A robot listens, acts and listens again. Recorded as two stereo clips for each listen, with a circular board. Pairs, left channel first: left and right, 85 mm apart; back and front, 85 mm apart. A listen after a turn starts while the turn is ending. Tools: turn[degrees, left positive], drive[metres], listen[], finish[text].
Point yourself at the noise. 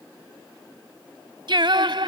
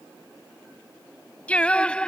Thought: The singing: 100° right.
Action: turn[-100]
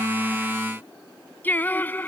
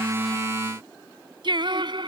Thought: The singing is now 25° left.
Action: turn[25]
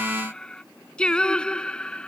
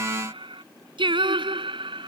Thought: The singing is now 10° left.
Action: turn[10]
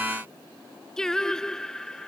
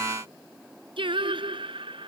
Action: finish[Found it: singing, straight ahead.]